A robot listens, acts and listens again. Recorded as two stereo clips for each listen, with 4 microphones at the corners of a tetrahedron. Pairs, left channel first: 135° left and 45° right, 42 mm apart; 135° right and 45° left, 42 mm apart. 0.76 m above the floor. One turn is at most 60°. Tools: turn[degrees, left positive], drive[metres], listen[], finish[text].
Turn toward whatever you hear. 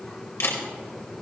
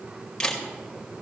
Thought: The camera shutter: 150° left.
Action: turn[60]
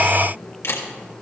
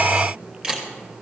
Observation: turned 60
Thought: The camera shutter is now 115° left.
Action: turn[60]
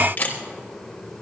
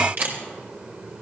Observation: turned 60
Thought: The camera shutter is now 85° left.
Action: turn[60]
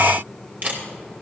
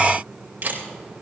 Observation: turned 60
Action: finish[Facing the camera shutter, 2 to 4 m away.]